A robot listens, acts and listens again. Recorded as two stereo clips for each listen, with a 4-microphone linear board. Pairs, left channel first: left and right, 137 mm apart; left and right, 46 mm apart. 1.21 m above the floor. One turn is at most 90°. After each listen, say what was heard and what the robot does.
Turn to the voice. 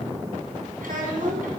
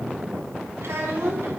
Turn 90° right.
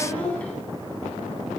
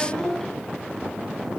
So it is at 10° left. Turn 10° left.
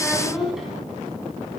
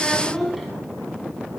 Found it: a child speaking, straight ahead.